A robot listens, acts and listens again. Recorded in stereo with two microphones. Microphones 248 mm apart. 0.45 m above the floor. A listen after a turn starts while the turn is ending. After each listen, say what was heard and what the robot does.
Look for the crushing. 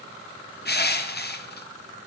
The crushing: about 40° left or 140° left. Turn 40° left.
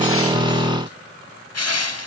So it is at 100° left. Turn 100° left.
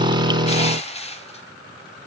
The crushing is now 25° left. Turn 25° left.
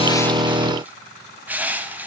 Found it: crushing, straight ahead, under 1 m away.